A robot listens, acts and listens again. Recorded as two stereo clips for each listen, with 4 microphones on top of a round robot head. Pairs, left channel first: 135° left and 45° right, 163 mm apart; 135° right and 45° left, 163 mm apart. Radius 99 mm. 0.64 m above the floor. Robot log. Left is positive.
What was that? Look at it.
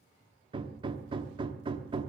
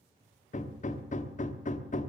note: The hammering: 100° right.
cmd yaw -100
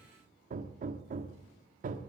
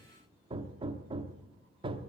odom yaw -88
note: The hammering is now 10° right.
cmd yaw -10
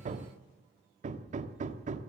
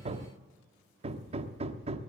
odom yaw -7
end: Found it: hammering, straight ahead.